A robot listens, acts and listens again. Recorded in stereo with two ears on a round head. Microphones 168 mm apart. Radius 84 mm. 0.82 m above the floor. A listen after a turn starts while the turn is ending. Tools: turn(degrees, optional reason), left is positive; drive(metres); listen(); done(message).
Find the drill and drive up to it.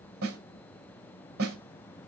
listen()
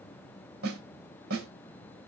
listen()
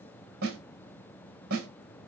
done("I can't make out a drill, only a snare drum.")